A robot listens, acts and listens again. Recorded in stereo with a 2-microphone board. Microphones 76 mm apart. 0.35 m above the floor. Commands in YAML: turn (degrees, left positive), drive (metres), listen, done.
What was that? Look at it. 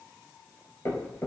turn: 40
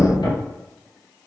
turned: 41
turn: 105
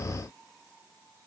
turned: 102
done: "I heard a thud from this way, but can't make it out now."